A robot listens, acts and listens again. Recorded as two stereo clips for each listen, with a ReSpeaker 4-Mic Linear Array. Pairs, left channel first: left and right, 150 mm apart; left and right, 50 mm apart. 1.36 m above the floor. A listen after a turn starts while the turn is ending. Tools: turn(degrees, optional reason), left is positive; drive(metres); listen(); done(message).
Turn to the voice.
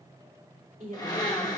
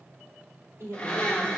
turn(degrees=-60, reason="The woman speaking: about 60° right or 120° right.")
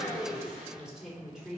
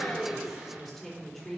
done("Facing the woman speaking.")